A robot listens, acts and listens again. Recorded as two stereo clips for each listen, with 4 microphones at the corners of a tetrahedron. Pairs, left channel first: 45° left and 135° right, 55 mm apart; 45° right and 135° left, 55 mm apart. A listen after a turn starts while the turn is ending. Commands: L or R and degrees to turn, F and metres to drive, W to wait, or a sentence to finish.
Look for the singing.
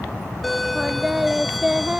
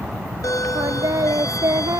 L155
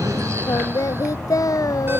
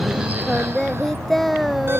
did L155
L40
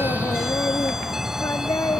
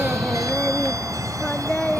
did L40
L25
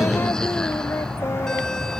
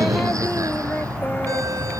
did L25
W
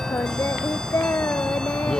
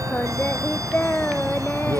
Facing the singing.